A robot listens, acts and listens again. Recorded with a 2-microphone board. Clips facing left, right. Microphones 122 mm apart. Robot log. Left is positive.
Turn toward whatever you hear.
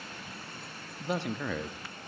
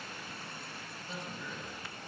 cmd yaw +90
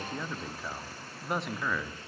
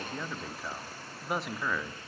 end: Facing the man speaking.